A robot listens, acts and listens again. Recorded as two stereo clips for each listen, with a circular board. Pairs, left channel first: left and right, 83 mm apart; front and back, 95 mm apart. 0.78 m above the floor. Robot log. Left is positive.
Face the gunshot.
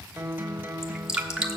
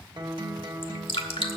cmd idle
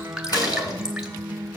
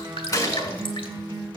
note: The gunshot: 50° left.
cmd yaw +50
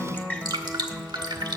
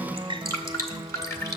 end: Facing where the gunshot came from. I can't hear it now.